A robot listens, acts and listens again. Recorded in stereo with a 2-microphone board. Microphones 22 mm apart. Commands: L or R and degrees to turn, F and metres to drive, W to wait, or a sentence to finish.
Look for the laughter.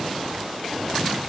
W
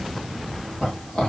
L60
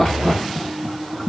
L55
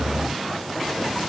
W
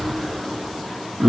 Found it: laughter, straight ahead.